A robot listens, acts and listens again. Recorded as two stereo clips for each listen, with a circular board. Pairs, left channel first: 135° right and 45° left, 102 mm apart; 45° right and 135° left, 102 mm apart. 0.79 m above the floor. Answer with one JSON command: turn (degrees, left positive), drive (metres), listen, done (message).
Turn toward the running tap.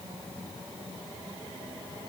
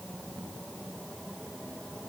{"listen": true}
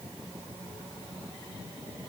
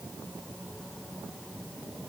{"listen": true}
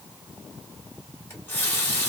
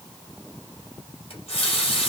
{"turn": -65}
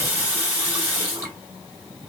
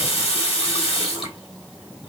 {"turn": -30}
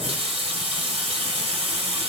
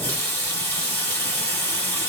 {"turn": 25}
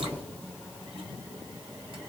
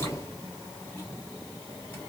{"listen": true}
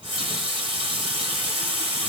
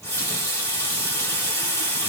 {"turn": 15}
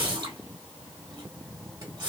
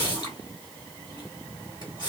{"done": "Facing the running tap, 1 to 2 m away."}